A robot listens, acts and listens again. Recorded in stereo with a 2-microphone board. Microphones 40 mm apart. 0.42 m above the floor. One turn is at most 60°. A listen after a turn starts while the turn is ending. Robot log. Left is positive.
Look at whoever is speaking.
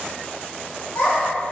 note: The child speaking: about 60° left or 120° left.
cmd yaw +60
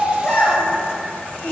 note: So it is at 40° left.
cmd yaw +40
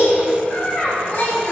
note: The child speaking is now 50° left.
cmd yaw +50
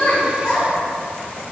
note: The child speaking is now 25° left.
cmd yaw +25
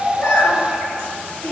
end: Facing the child speaking, 1 to 2 m away.